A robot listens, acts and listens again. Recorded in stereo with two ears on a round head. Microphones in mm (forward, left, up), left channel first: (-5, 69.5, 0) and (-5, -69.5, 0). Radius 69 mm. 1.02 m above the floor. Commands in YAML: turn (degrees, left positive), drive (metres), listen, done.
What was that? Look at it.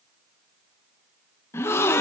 turn: 15
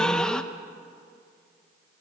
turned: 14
done: "Facing the gasp."